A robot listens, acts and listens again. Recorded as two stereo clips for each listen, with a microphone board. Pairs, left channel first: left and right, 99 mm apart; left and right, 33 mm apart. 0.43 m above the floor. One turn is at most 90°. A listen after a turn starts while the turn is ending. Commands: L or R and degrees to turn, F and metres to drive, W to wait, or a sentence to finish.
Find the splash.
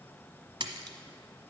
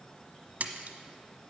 R55
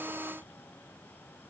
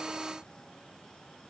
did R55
W
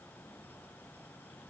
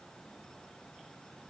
I heard a splash, but can't make it out now. It was about straight ahead or 70° right.